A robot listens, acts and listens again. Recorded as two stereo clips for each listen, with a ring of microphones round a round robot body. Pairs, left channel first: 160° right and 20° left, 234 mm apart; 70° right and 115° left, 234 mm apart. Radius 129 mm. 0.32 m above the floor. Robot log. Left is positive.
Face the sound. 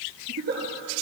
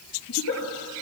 note: The giggle: 30° right.
cmd yaw -30
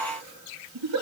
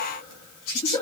end: Facing the giggle.